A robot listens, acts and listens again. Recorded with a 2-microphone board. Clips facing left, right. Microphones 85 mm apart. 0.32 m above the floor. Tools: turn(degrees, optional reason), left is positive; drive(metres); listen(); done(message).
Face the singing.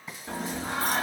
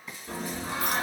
turn(degrees=55, reason="The singing: about 55° left or 125° left.")
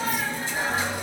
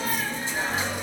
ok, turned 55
turn(degrees=25, reason="So it is at 25° left.")
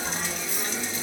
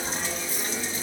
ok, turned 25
done("Facing the singing, 1 to 2 m away.")